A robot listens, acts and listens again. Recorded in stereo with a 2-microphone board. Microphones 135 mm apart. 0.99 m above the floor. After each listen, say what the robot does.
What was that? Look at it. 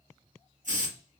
Turn 70° right.
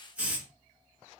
Turn 10° right.
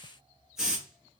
Found it: a hiss, straight ahead, 1 to 2 m away.